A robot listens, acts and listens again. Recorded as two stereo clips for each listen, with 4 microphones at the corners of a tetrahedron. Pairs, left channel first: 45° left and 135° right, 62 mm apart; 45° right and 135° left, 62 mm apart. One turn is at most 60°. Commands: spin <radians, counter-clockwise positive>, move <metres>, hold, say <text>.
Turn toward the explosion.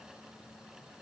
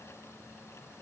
hold
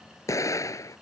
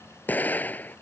spin 0.26
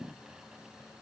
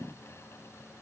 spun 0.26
say I heard an explosion from this way, but can't make it out now.